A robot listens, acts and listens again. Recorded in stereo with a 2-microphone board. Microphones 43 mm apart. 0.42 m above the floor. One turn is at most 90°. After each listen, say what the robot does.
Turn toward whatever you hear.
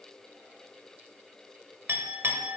Turn 60° right.
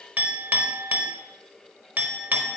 Turn 45° right.
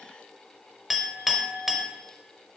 Facing the clink, under 1 m away.